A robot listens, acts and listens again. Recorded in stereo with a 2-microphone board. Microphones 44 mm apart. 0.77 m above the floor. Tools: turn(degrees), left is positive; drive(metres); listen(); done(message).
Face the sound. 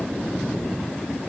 listen()
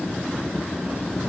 listen()
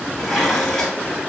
turn(degrees=30)
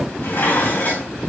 turn(degrees=145)
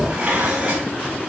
turn(degrees=-25)
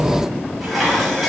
done("Found it: dishes clattering, straight ahead, over 4 m away.")